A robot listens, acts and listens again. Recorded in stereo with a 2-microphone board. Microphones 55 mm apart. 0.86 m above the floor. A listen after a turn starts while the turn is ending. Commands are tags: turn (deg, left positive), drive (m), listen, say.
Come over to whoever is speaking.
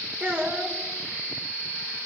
<turn deg="-35"/>
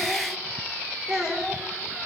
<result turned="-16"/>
<turn deg="-20"/>
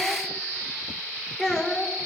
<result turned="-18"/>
<drive m="1.0"/>
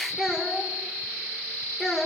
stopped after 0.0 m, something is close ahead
<say>Something is in my way. I am facing the child speaking but have not reached it.</say>